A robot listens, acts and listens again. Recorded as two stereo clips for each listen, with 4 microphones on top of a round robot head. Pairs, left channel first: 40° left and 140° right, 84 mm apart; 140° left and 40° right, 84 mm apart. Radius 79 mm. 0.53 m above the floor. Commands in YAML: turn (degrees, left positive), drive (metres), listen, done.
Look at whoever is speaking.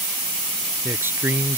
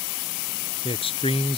turn: 155
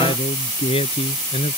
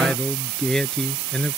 turn: 55
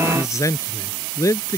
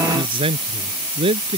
turn: -15
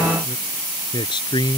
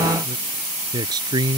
done: "Found it: a man speaking, straight ahead."